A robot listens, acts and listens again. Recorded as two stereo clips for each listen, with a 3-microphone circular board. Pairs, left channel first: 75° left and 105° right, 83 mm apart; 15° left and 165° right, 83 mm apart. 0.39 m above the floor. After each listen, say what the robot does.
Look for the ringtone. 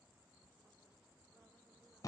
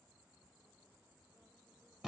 Keep listening.
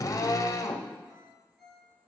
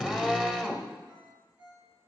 Turn 170° left.
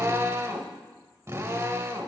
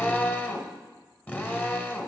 Keep listening.
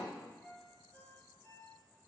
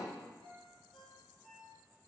Found it: a ringtone, straight ahead, 2 to 4 m away.